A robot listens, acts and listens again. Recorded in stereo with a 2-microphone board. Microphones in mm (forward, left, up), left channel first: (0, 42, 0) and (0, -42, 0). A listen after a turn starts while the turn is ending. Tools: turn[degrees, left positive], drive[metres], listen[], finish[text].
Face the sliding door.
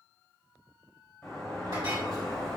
Action: turn[30]
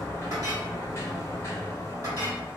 Thought: So it is at 145° left.
Action: turn[145]
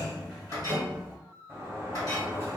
Thought: The sliding door is now 30° right.
Action: turn[-30]
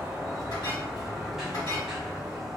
Action: finish[Facing the sliding door.]